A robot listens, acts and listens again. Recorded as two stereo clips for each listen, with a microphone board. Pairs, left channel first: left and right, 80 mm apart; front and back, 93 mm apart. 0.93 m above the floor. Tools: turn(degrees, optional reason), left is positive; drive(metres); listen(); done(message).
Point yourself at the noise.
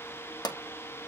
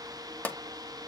turn(degrees=70, reason="The pop: 70° left.")
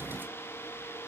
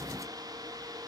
done("Facing where the pop came from. I can't hear it now.")